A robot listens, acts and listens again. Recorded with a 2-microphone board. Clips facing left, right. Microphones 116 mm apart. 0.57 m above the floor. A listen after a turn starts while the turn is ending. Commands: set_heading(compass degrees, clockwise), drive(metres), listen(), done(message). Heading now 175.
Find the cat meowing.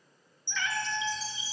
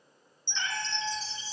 set_heading(205)
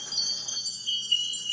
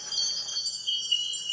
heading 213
listen()
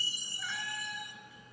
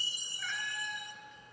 set_heading(203)
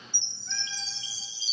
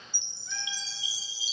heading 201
listen()
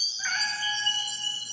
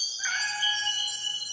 done("Found it: a cat meowing, straight ahead.")